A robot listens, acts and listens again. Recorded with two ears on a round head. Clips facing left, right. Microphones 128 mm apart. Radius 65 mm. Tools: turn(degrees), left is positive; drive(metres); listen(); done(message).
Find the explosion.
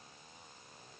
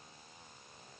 listen()
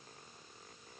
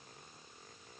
listen()
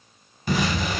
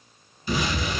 turn(degrees=45)
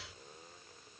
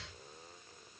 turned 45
listen()
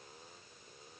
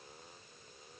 done("I heard an explosion, but can't make it out now. It was about straight ahead or 90° left.")